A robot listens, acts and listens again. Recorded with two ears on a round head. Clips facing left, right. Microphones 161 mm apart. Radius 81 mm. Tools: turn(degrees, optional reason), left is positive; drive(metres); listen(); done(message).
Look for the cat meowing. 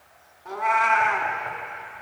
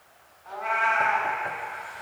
turn(degrees=55, reason="The cat meowing: about 55° left or 125° left.")
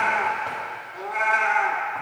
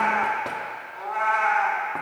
turn(degrees=25, reason="So it is at 25° left.")
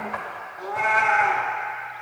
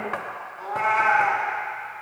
turn(degrees=15, reason="The cat meowing is now 15° left.")
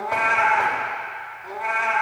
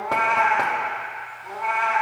done("Found it: a cat meowing, straight ahead, 1 to 2 m away.")